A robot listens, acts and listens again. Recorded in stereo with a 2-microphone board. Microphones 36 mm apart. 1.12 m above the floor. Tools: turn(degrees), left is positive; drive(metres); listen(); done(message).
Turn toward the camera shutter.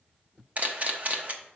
turn(degrees=-40)
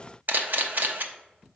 turn(degrees=-90)
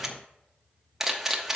turn(degrees=-15)
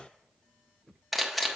done("Found it: a camera shutter, straight ahead, under 1 m away.")